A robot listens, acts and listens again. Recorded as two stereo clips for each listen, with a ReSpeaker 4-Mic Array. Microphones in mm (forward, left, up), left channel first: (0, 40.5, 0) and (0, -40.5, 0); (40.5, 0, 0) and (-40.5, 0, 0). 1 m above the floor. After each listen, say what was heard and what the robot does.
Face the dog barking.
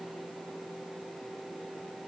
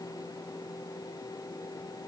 Keep listening.
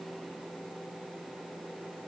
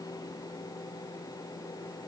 Keep listening.
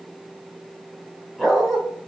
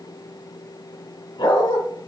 Facing the dog barking, 2 to 4 m away.